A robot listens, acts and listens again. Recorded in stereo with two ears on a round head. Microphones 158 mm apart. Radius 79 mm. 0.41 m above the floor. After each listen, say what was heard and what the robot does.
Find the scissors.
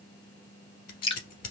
The scissors: about 50° left or 130° left. Turn 50° left.
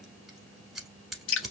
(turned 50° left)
Facing the scissors, 1 to 2 m away.